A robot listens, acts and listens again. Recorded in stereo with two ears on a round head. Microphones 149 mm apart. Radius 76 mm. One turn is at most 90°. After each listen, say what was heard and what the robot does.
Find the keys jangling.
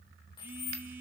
The keys jangling: about 25° left or 155° left. Turn 25° left.
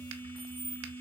Facing the keys jangling, 2 to 4 m away.